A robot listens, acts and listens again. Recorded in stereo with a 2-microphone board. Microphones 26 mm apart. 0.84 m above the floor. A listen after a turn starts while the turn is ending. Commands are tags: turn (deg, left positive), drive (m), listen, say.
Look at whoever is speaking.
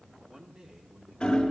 <turn deg="-35"/>
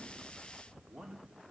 <turn deg="-110"/>
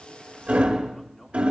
<turn deg="15"/>
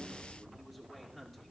<say>Found it: a man speaking, straight ahead.</say>